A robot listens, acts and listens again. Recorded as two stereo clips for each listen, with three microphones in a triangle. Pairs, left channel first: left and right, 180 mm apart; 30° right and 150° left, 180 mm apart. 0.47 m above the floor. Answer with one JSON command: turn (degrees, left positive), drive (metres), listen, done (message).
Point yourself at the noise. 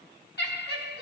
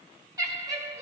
{"turn": 75}
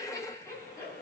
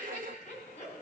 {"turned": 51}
{"turn": 15}
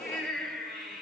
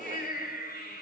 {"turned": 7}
{"done": "Facing the laughter, 2 to 4 m away."}